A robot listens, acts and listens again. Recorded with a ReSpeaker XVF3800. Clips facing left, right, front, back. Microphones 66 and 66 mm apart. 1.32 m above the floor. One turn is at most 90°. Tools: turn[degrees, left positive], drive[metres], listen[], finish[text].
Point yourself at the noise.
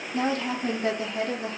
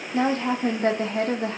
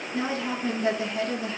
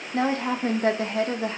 Thought: The woman speaking: 125° right.
Action: turn[-90]
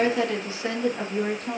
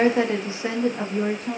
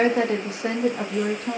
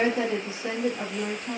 Action: finish[Found it: a woman speaking, straight ahead, 1 to 2 m away.]